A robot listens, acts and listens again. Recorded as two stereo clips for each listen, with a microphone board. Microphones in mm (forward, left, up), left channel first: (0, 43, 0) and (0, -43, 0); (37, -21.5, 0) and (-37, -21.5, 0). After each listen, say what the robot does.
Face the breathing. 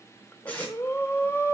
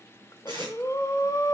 Turn 35° left.
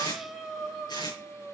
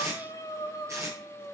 Found it: breathing, straight ahead, 1 to 2 m away.